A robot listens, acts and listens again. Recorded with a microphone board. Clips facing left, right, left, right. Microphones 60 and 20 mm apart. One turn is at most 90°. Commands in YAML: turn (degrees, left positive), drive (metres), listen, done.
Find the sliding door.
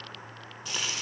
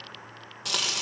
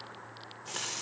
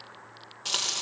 listen: true
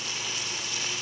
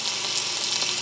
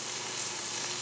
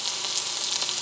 listen: true
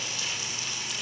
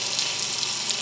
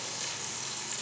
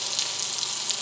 done: "I can't make out a sliding door to turn to."